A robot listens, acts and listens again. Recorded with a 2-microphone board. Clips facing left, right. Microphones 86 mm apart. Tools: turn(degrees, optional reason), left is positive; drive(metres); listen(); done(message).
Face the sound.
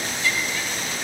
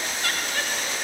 turn(degrees=-60, reason="The laughter: about 60° right or 120° right.")
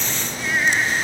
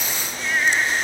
done("Found it: laughter, straight ahead.")